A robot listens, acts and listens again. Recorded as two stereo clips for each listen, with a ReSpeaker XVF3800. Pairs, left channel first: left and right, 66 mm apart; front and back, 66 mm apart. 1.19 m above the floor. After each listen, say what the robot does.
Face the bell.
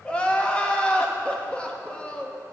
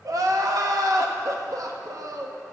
Keep listening.
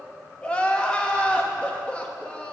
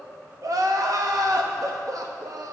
Keep listening.
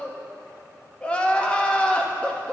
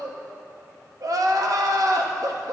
I can't make out a bell to turn to.